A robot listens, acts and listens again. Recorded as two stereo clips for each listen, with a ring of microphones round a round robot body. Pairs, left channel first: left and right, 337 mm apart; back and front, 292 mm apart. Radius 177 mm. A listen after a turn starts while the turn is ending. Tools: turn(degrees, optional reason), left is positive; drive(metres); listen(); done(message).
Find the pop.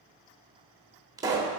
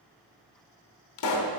turn(degrees=-170, reason="The pop: 170° right.")
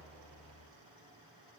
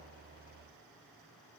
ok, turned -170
done("I heard a pop from this way, but can't make it out now.")